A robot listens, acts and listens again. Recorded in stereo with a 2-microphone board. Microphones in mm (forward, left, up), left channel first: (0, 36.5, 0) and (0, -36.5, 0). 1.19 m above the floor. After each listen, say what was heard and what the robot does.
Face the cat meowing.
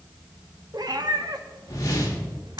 The cat meowing: about 65° right or 115° right. Turn 65° right.
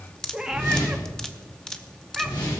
Facing the cat meowing, 1 to 2 m away.